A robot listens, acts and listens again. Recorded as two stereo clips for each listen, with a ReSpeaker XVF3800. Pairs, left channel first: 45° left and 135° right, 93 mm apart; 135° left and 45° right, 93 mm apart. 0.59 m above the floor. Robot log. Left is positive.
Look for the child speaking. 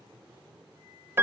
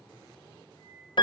cmd idle
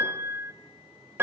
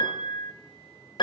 cmd idle
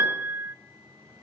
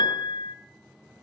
end: I can't make out a child speaking, only a piano and a flute.